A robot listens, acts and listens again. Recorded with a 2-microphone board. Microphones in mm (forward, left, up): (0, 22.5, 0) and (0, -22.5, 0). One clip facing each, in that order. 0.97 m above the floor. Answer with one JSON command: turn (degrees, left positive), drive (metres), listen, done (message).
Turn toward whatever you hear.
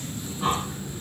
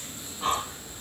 {"turn": 30}
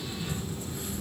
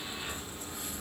{"turn": -30}
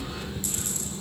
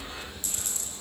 {"done": "Facing the breathing."}